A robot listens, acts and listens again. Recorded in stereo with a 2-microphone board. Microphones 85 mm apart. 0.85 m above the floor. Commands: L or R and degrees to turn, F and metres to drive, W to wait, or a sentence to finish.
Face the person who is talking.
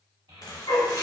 R75
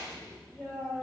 Found it: a child speaking, straight ahead.